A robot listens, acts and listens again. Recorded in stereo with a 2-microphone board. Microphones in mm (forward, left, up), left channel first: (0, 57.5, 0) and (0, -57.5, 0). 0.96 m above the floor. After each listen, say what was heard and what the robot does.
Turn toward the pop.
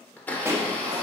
The pop: about 20° right or 160° right. Turn 20° right.
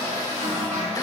Keep listening.
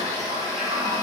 I heard a pop, but can't make it out now. It was about straight ahead or 140° right.